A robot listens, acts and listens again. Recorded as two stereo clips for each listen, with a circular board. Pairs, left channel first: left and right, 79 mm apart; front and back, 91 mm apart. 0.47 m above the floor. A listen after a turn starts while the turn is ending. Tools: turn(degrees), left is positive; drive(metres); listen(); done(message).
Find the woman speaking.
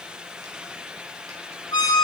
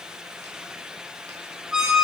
listen()
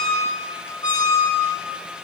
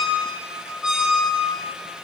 listen()
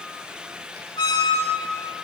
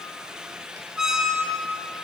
done("I can't make out a woman speaking, only a squeak.")